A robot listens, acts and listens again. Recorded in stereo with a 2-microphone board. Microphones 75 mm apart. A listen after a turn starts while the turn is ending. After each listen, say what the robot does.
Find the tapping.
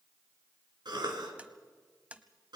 Turn 20° right.
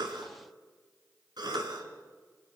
Keep listening.
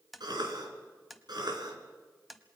Facing the tapping, 1 to 2 m away.